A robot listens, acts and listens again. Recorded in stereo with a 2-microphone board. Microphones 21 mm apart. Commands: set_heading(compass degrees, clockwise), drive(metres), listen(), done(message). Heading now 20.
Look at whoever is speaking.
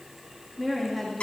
set_heading(50)
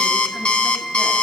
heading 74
listen()
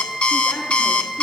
listen()
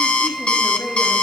done("I heard a woman speaking, but can't make it out now. It was about 50° left or 120° right.")